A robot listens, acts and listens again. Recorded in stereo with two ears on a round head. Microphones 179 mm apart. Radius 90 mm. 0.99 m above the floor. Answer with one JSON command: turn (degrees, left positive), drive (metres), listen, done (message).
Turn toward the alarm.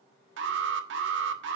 {"turn": -65}
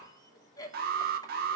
{"turn": -45}
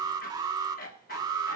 {"turn": -20}
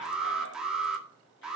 {"done": "Facing the alarm, 1 to 2 m away."}